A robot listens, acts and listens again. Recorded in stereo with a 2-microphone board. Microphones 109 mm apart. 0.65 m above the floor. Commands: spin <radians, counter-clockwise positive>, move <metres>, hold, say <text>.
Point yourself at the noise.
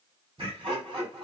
spin -0.87
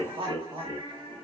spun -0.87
spin -1.22
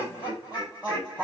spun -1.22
spin -0.26
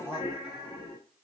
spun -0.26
say Found it: laughter, straight ahead, 2 to 4 m away.